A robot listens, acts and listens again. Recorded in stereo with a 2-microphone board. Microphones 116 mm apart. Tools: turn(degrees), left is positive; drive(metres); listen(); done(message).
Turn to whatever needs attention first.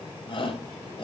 turn(degrees=50)
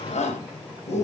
turn(degrees=80)
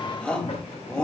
done("Found it: a shout, straight ahead.")